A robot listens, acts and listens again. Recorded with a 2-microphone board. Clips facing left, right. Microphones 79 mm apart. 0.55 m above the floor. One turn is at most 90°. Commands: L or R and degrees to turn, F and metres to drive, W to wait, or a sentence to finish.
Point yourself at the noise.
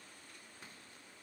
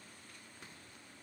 W
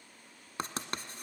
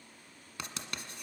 L35
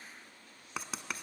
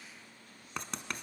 Found it: writing, straight ahead, 1 to 2 m away.